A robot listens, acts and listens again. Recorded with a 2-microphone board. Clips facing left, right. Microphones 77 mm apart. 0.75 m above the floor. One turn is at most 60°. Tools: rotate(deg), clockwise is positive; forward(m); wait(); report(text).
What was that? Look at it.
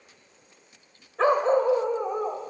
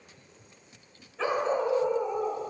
rotate(-50)
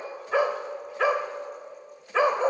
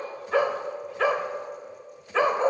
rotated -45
rotate(-10)
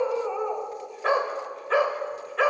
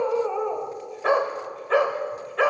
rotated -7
report("Found it: a dog barking, straight ahead, 1 to 2 m away.")